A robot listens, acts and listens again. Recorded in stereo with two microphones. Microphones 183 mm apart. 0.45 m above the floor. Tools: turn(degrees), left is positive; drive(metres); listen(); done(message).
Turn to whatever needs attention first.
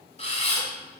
listen()
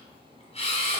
listen()
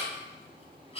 done("I can't make out anything urgent to turn to.")